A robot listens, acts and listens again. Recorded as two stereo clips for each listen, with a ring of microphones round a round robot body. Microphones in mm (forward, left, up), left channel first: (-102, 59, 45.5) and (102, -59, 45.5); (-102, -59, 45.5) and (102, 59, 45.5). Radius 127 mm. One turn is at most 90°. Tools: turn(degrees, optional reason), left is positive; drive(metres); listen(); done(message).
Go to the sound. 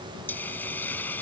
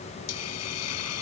turn(degrees=-90, reason="The hiss: 125° right.")
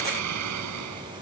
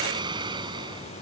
turn(degrees=-40, reason="The hiss is now 40° right.")
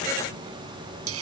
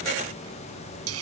drive(metres=1.0)
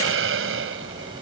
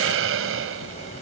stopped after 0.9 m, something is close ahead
done("Arrived at the hiss, straight ahead.")